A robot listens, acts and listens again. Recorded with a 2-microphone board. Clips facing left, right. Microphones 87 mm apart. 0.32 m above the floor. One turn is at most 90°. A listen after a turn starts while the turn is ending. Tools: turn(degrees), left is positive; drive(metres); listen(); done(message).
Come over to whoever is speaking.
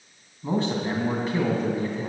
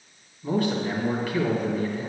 turn(degrees=25)
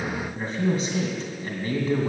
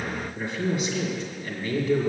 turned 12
turn(degrees=90)
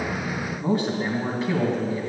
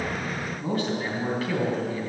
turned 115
turn(degrees=25)
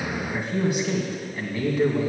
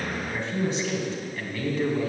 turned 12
turn(degrees=10)
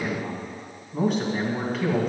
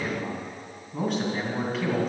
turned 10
drive(metres=1.0)
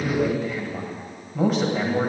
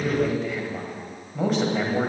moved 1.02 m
drive(metres=1.0)
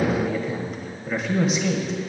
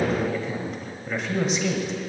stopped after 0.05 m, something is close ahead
done("Arrived at the man speaking, straight ahead.")